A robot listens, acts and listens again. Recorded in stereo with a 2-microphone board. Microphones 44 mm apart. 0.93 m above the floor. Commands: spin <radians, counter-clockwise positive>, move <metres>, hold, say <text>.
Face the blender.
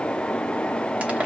hold
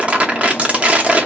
hold
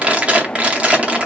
say I can't make out a blender, only crumpling.